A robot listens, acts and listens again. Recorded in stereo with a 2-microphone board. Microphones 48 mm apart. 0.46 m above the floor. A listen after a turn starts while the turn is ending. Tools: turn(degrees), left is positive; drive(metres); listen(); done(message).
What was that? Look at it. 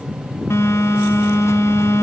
turn(degrees=90)
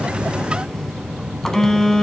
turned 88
done("Found it: a phone buzzing, straight ahead, 1 to 2 m away.")